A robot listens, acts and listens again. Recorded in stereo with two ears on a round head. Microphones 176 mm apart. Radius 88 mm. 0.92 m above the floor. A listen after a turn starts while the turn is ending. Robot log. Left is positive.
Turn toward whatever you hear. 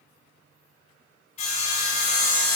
note: The sawing: about 35° left or 145° left.
cmd yaw +35
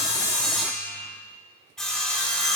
end: Facing the sawing, 2 to 4 m away.